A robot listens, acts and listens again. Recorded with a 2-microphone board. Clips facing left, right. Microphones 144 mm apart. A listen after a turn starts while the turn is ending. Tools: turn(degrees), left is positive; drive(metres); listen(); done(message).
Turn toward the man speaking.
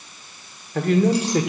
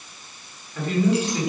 turn(degrees=70)
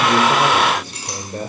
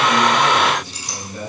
turn(degrees=55)
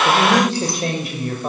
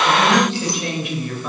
turn(degrees=50)
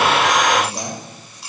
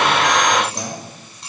turn(degrees=15)
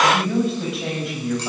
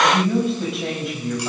done("Found it: a man speaking, straight ahead.")